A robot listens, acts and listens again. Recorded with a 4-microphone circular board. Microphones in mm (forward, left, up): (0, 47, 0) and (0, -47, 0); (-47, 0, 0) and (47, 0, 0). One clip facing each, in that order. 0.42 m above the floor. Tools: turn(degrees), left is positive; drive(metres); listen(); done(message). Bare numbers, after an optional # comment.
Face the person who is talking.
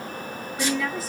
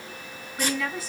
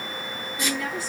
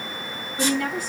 done("Found it: a woman speaking, straight ahead.")